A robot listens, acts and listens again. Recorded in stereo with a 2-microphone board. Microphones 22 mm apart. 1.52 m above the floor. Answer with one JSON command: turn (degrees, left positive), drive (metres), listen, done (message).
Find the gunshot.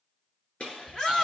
{"turn": 75}
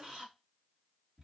{"listen": true}
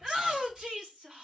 {"done": "I heard a gunshot, but can't make it out now. It was about straight ahead or 30° left."}